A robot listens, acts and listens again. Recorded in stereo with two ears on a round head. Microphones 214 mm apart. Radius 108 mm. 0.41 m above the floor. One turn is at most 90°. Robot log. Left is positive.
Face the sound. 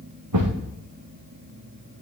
note: The thud: about 75° right or 105° right.
cmd yaw -75
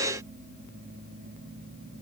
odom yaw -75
cmd idle
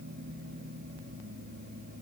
end: I heard a thud, but can't make it out now. It was about straight ahead or 30° right.